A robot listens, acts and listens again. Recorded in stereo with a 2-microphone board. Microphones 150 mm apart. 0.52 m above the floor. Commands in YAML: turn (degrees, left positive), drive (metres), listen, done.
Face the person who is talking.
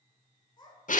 turn: 30
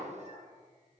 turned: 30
listen: true
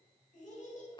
turn: 115
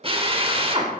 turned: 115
listen: true
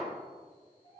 turn: 40
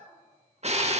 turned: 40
turn: 30
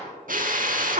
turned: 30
listen: true
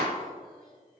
listen: true
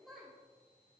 done: "Found it: a child speaking, straight ahead, 1 to 2 m away."